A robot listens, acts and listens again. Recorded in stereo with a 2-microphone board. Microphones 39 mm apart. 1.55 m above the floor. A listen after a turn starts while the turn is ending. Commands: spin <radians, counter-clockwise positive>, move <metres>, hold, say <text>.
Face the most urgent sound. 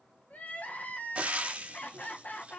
spin 0.79
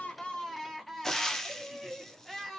say Found it: crying, straight ahead, 1 to 2 m away.